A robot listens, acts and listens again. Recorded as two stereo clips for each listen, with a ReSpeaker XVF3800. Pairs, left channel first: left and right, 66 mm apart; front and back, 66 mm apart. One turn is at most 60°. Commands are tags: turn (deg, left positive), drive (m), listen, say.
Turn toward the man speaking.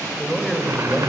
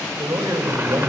<turn deg="60"/>
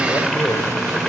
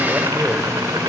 <turn deg="60"/>
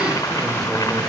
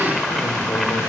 <turn deg="50"/>
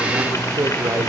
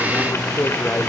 <turn deg="-60"/>
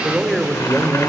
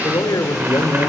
<turn deg="-10"/>
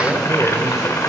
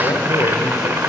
<say>Found it: a man speaking, straight ahead.</say>